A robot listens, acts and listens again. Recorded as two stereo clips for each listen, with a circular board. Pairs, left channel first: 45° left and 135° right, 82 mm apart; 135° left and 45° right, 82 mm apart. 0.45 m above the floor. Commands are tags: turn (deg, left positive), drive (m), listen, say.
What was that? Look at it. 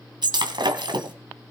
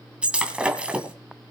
<turn deg="-120"/>
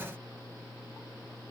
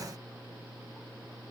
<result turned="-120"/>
<say>I heard breaking glass from this way, but can't make it out now.</say>